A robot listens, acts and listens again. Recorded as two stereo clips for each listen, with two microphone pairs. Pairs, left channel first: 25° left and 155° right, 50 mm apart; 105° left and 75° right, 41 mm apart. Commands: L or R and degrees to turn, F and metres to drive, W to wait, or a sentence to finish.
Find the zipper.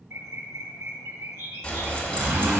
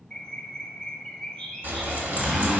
R135
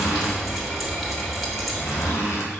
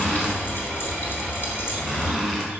L20
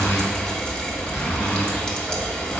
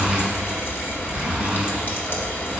Facing the zipper.